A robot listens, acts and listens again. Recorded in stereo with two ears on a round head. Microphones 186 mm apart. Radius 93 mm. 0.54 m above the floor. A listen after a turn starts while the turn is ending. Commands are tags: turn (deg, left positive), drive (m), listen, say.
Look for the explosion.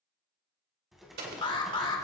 <turn deg="-50"/>
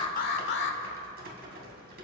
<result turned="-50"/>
<listen/>
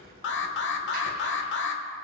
<say>I heard an explosion, but can't make it out now. It was about straight ahead or 80° right.</say>